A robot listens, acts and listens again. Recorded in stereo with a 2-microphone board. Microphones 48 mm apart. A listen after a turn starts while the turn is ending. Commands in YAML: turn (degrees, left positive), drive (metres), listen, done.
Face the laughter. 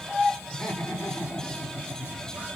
turn: 70
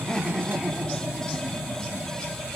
turn: -10
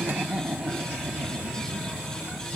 turn: -40
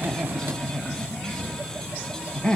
turn: 20
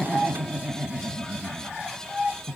done: "Found it: laughter, straight ahead, 1 to 2 m away."